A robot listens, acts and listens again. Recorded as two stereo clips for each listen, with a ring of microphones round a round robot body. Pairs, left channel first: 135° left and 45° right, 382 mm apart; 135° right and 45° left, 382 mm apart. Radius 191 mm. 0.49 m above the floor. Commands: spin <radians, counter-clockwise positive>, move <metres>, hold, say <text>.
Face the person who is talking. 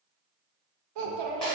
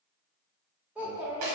spin -0.70
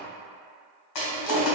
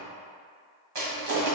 hold
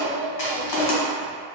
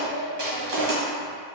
spin 0.17
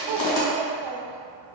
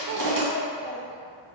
say Found it: a child speaking, straight ahead, under 1 m away.